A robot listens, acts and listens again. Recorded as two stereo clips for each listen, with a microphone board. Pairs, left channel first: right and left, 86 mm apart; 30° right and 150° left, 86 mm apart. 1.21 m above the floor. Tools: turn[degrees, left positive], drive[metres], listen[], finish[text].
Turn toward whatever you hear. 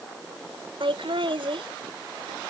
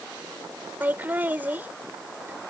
Thought: The laughter: 80° left.
Action: turn[80]
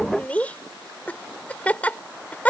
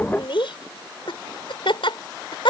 Thought: The laughter is now 15° right.
Action: turn[-15]
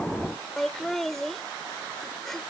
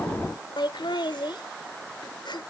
Action: finish[Found it: laughter, straight ahead.]